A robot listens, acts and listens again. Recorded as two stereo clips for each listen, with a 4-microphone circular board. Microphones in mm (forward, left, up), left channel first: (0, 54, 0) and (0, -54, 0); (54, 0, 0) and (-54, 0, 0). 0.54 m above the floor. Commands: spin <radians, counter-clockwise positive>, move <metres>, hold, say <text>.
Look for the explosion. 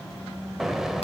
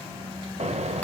spin -3.05
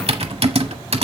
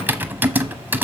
say Facing where the explosion came from. I can't hear it now.